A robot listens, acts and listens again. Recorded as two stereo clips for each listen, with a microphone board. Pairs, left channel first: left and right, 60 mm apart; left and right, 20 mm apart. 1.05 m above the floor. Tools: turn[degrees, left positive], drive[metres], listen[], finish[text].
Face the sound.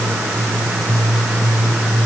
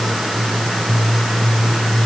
Action: listen[]
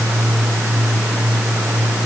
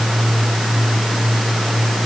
Action: listen[]
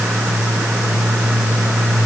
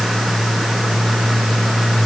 Action: finish[I can't make out anything.]